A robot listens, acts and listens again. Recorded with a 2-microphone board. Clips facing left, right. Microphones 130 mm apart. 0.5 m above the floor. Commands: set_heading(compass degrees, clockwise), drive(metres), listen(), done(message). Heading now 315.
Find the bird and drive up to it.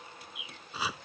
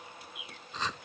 set_heading(285)
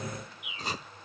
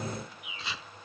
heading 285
set_heading(315)
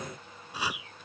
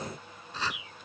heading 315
drive(1.0)
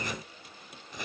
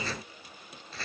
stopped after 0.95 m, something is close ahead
listen()
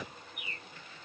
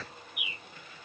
set_heading(325)
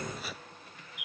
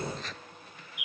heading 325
done("I am next to the bird.")